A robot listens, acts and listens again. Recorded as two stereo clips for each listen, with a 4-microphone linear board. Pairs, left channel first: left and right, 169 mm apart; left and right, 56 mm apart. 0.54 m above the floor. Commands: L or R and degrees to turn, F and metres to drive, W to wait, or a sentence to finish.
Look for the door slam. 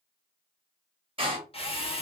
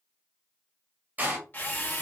R35
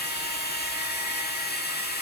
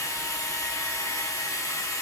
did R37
W
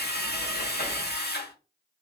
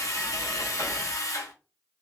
I heard a door slam, but can't make it out now. It was about 5° left or 110° right.